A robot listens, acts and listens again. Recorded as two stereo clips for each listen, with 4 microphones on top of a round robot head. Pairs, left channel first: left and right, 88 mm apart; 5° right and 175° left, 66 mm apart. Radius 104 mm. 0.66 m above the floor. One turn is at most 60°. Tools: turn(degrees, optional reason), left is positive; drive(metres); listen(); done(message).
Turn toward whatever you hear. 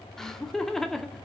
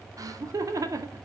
turn(degrees=60, reason="The laughter: 175° left.")
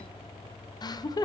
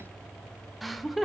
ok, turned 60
turn(degrees=60, reason="The laughter is now 85° left.")
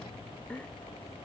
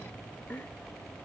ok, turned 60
turn(degrees=25, reason="The laughter is now 25° left.")
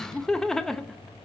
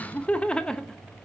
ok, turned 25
turn(degrees=30, reason="The laughter is now 30° left.")
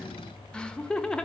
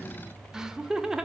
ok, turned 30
turn(degrees=60, reason="The laughter is now 130° left.")
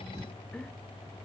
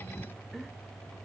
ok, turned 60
turn(degrees=60, reason="Nothing new. It was at 70° left.")
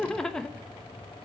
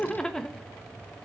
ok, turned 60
turn(degrees=35, reason="The laughter is now 35° left.")
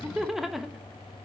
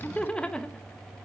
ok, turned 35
turn(degrees=-15, reason="The laughter is now 15° right.")
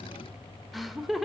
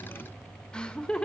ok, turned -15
done("Found it: laughter, straight ahead, 1 to 2 m away.")